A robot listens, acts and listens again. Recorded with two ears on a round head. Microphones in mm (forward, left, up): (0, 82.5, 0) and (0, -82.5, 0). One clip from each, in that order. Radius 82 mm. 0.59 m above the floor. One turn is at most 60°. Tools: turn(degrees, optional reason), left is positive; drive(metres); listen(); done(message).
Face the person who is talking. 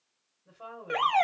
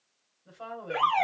turn(degrees=-45, reason="The woman speaking: about 45° right or 135° right.")
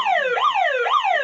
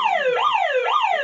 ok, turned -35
listen()
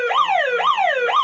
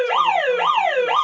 listen()
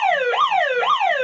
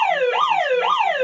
done("I heard a woman speaking, but can't make it out now. It was about 10° right or 100° right.")